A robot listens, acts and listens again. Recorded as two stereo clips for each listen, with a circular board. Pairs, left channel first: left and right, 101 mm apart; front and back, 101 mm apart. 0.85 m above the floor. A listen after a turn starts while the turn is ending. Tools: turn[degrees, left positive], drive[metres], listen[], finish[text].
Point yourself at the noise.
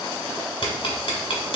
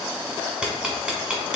Thought: The ticking: 100° left.
Action: turn[100]
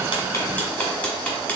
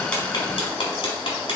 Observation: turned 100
Thought: The ticking is now 15° left.
Action: turn[15]
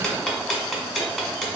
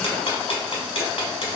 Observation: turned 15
Action: finish[Facing the ticking, 1 to 2 m away.]